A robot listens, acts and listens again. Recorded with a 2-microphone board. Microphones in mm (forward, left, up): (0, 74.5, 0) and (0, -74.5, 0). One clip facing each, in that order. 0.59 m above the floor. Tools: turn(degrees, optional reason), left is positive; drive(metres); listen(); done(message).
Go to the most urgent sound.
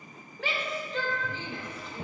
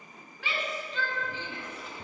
turn(degrees=55, reason="The shout: about 55° left or 125° left.")
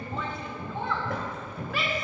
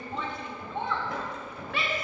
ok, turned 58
drive(metres=1.0)
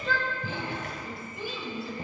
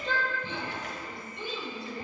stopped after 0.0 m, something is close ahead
done("Something is in my way. I am facing the shout but have not reached it.")